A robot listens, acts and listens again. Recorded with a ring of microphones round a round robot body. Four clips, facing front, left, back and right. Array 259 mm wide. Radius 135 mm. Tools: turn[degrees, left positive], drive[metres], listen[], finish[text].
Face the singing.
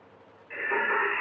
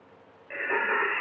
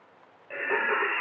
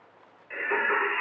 Thought: The singing: 140° left.
Action: turn[140]
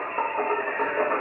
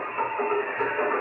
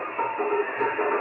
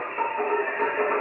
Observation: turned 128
Thought: The singing is now 30° right.
Action: turn[-30]
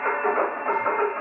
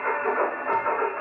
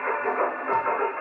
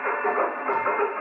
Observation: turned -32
Thought: The singing is now 15° right.
Action: turn[-15]
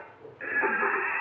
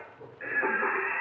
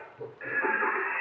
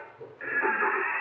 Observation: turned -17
Action: finish[Facing the singing.]